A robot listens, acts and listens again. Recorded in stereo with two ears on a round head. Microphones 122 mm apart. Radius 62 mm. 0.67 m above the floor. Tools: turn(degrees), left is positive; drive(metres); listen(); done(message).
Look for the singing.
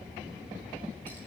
listen()
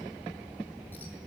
listen()
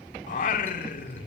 turn(degrees=65)
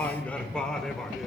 done("Facing the singing.")